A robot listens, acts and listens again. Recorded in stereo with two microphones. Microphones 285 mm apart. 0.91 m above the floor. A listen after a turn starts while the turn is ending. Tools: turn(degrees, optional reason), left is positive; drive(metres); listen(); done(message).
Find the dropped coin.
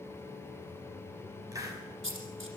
turn(degrees=-45, reason="The dropped coin: about 45° right or 135° right.")
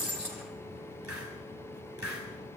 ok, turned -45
listen()
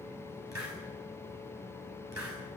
done("I heard a dropped coin, but can't make it out now. It was about straight ahead or 90° right.")